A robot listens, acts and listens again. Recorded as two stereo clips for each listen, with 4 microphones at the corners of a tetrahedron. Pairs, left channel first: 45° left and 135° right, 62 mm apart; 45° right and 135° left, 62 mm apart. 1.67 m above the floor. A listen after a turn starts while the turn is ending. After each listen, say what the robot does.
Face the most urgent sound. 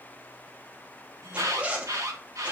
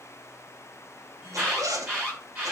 Turn 165° right.
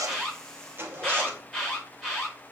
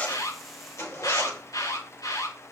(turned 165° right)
Turn 45° right.
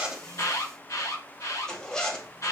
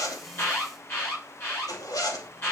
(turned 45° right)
Found it: an alarm, straight ahead.